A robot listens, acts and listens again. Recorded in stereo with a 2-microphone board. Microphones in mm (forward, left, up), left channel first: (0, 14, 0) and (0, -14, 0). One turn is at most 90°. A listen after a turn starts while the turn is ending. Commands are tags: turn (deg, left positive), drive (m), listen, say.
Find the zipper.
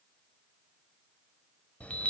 <listen/>
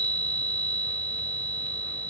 <listen/>
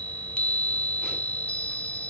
<say>I can't make out a zipper, only a chime.</say>